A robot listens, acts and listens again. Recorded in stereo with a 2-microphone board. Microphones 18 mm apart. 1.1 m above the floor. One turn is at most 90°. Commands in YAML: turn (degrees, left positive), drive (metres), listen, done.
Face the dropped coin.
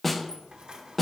turn: -55
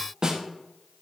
listen: true
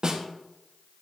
done: "I heard a dropped coin, but can't make it out now. It was about straight ahead or 70° right."